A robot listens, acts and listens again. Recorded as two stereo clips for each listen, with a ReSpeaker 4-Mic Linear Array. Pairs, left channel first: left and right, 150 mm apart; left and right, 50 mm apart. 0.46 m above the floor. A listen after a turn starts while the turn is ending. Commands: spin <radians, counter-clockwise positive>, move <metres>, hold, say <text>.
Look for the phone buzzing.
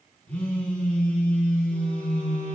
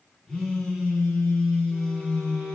spin 0.52
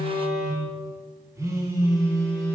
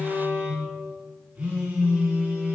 spin -0.35
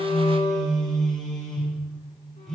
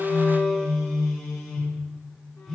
say Facing the phone buzzing.